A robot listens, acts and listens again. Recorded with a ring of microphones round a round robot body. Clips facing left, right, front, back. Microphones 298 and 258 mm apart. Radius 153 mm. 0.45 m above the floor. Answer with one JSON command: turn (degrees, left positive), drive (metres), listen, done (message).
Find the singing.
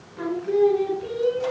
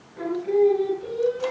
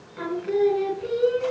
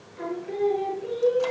{"turn": 10}
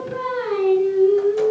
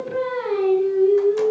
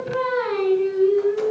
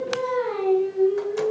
{"done": "Found it: singing, straight ahead."}